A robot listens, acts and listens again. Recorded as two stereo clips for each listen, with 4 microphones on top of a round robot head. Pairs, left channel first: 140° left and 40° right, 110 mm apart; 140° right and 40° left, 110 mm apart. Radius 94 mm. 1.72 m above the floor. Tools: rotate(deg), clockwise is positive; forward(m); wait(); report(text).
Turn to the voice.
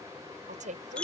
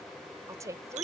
rotate(25)
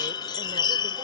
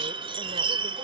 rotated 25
wait()
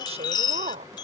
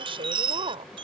rotate(10)
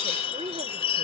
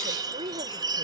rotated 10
report("Found it: a woman speaking, straight ahead.")